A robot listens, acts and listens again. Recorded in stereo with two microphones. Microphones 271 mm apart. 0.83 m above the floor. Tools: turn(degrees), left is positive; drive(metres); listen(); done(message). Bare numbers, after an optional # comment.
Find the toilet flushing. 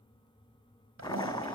turn(-90)
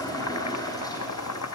# So it is at 15° left.
turn(15)
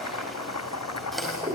done("Found it: a toilet flushing, straight ahead, over 4 m away.")